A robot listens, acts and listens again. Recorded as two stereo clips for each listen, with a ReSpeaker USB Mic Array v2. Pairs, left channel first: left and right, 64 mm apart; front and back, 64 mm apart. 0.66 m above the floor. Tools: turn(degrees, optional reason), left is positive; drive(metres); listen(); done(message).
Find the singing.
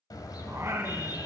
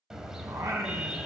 turn(degrees=-140, reason="The singing: 140° right.")
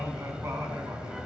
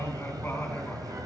turn(degrees=-60, reason="The singing is now 60° right.")
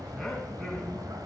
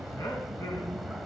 listen()
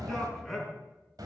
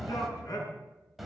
done("Facing the singing.")